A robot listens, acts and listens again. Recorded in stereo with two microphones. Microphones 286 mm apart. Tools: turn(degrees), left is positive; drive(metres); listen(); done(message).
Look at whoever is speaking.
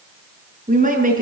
turn(degrees=-25)
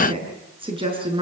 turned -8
turn(degrees=-20)
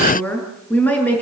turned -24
done("Facing the woman speaking, over 4 m away.")